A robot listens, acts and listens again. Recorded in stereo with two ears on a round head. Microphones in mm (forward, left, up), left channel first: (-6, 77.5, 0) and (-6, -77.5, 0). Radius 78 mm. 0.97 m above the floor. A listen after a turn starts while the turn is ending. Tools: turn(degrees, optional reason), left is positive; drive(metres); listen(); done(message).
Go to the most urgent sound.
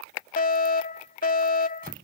turn(degrees=45, reason="The fire alarm: about 45° left or 135° left.")
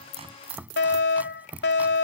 turn(degrees=85, reason="So it is at 85° left.")
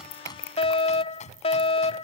turn(degrees=35, reason="The fire alarm is now 35° left.")
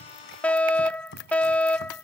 turn(degrees=10, reason="The fire alarm is now 10° left.")
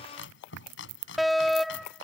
drive(metres=1.0)
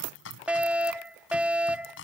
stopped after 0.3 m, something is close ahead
turn(degrees=-10, reason="The fire alarm is now 10° right.")
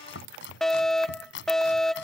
done("Something is in my way. I am facing the fire alarm but have not reached it.")